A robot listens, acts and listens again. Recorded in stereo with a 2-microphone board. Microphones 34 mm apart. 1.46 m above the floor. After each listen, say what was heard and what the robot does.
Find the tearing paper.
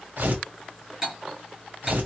The tearing paper: about 65° right or 115° right. Turn 65° right.
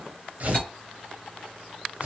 So it is at 50° right. Turn 50° right.
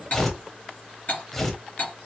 The tearing paper is now 10° left. Turn 10° left.
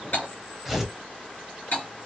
Facing the tearing paper, under 1 m away.